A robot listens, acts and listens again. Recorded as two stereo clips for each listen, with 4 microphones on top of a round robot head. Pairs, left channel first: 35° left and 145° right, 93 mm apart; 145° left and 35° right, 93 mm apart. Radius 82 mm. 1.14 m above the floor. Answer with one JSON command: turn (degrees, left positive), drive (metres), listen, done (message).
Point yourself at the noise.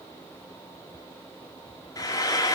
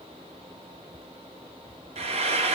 {"turn": -20}
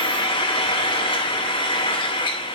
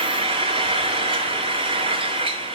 {"done": "Facing the frying, 1 to 2 m away."}